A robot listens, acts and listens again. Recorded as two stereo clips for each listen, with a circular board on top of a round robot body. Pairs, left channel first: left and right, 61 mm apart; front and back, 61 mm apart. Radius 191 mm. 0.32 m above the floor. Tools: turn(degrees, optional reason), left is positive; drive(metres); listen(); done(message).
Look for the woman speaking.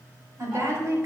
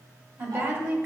turn(degrees=-130, reason="The woman speaking: 130° right.")
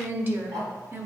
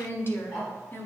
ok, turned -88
turn(degrees=-45, reason="The woman speaking is now 45° right.")
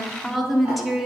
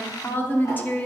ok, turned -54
done("Found it: a woman speaking, straight ahead.")